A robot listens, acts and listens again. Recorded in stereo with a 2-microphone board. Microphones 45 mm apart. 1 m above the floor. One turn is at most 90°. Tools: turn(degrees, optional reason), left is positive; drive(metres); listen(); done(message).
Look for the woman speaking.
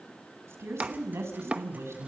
turn(degrees=-75, reason="The woman speaking: about 75° right or 105° right.")
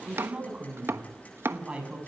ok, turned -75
turn(degrees=-25, reason="So it is at 25° right.")
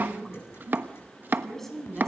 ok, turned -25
done("Found it: a woman speaking, straight ahead.")